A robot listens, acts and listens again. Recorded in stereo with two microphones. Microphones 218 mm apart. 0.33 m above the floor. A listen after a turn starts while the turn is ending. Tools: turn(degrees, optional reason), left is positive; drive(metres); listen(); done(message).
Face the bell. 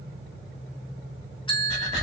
turn(degrees=20, reason="The bell: about 20° left or 160° left.")
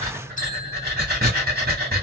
listen()
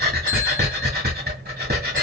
listen()
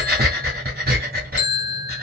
turn(degrees=140, reason="So it is at 140° left.")
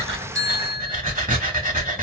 turn(degrees=55, reason="The bell is now 55° left.")
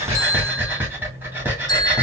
turn(degrees=20, reason="The bell is now 20° left.")
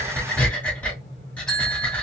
done("Found it: a bell, straight ahead, 1 to 2 m away.")